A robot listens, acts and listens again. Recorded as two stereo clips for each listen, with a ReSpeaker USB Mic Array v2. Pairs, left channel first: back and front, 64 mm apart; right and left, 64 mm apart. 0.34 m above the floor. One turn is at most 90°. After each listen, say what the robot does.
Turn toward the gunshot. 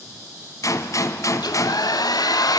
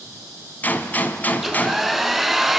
Turn 90° right.
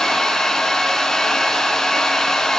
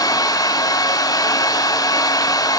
Turn 60° right.
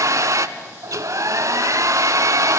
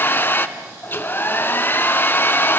Facing where the gunshot came from. I can't hear it now.